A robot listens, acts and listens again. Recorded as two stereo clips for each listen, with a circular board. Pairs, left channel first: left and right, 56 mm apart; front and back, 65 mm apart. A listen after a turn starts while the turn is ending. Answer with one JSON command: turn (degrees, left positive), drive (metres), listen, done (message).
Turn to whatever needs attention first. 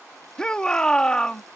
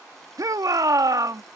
{"turn": 165}
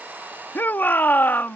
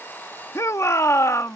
{"turn": 35}
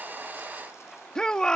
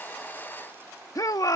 {"turn": 15}
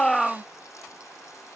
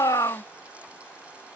{"done": "Facing the shout."}